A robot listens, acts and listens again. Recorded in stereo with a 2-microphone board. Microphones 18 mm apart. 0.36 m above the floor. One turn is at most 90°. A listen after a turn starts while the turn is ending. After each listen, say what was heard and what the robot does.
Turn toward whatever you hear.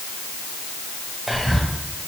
Turn 30° left.
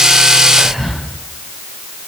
So it is at 25° right. Turn 25° right.
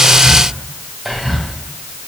Found it: whispering, straight ahead.